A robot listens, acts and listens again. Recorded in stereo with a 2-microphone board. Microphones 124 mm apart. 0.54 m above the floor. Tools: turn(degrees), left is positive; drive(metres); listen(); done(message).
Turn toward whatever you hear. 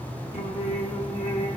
turn(degrees=60)
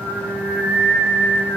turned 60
turn(degrees=-15)
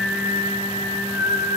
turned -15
turn(degrees=-25)
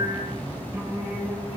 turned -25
turn(degrees=-25)
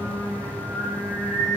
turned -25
done("Found it: singing, straight ahead.")